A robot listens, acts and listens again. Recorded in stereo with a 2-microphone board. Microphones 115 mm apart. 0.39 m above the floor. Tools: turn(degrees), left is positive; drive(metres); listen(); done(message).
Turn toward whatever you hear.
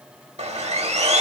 turn(degrees=-70)
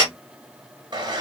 turn(degrees=-40)
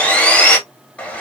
turn(degrees=10)
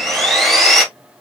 done("Found it: sawing, straight ahead.")